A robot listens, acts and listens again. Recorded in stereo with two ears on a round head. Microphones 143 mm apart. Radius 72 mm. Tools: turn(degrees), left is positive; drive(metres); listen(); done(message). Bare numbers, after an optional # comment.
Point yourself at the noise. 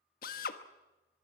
# The drill: about 60° left or 120° left.
turn(60)
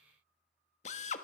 # So it is at 50° left.
turn(50)
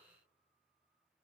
listen()
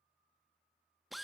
done("Found it: a drill, straight ahead, 1 to 2 m away.")